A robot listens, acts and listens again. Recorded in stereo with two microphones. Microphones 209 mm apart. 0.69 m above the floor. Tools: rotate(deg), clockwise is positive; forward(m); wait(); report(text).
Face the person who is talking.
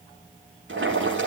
wait()
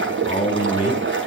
rotate(-30)
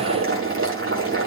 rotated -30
wait()
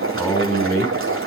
report("Found it: a man speaking, straight ahead, over 4 m away.")